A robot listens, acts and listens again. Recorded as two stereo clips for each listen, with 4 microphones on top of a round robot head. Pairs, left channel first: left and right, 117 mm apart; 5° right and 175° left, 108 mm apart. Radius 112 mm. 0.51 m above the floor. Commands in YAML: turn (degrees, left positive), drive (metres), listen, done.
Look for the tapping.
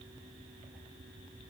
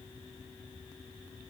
listen: true
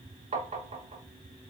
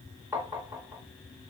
turn: -115
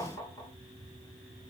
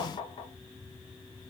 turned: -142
turn: 25
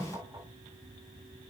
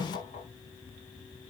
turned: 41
turn: -15
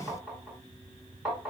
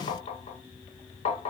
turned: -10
done: "Found it: tapping, straight ahead, under 1 m away."